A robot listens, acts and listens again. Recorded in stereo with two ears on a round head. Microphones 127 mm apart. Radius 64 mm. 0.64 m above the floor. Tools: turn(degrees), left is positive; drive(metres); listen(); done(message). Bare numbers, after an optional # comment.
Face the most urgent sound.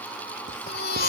# The baby crying: about 75° left or 105° left.
turn(75)
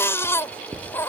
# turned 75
# So it is at 20° left.
turn(20)
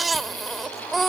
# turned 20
done("Found it: a baby crying, straight ahead.")